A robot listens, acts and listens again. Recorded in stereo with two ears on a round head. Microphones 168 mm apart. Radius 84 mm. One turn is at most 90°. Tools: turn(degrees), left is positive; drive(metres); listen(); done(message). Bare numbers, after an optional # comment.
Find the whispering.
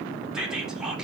turn(-30)
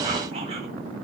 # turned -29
listen()
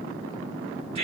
# So it is at 145° right.
turn(-90)
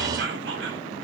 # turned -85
# The whispering is now 60° right.
turn(-60)
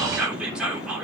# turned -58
done("Found it: whispering, straight ahead.")